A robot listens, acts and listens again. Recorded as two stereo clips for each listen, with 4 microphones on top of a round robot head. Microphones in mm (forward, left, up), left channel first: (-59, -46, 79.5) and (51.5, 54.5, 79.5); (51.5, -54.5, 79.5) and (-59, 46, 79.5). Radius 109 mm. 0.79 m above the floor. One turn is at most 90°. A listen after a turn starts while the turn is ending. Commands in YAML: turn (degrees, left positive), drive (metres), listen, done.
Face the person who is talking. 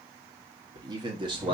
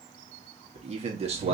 turn: 90
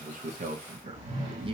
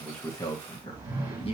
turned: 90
turn: 10
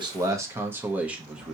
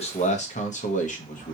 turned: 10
turn: -45
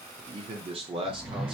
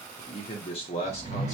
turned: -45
done: "Facing the man speaking."